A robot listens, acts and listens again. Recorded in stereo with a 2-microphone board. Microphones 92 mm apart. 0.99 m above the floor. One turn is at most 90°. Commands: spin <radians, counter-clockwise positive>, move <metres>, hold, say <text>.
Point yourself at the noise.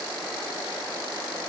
hold
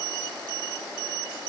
hold
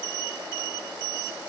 say I can't make out anything.